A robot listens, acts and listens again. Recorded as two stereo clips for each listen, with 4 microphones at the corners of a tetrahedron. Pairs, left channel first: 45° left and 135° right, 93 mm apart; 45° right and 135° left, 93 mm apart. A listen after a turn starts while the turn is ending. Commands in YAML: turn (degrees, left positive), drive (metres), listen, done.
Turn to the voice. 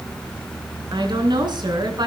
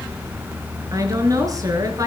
turn: -175
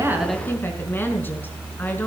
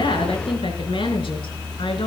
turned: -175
listen: true
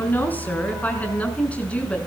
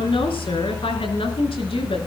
turn: -30
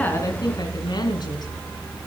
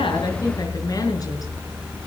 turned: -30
listen: true
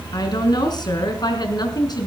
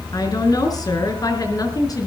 done: "Found it: a woman speaking, straight ahead, over 4 m away."